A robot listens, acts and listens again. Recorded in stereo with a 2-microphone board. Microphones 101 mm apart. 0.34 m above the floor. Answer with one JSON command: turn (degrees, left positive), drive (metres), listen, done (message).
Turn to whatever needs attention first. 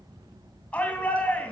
{"turn": 30}
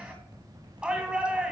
{"turn": -10}
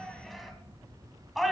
{"done": "Facing the shout."}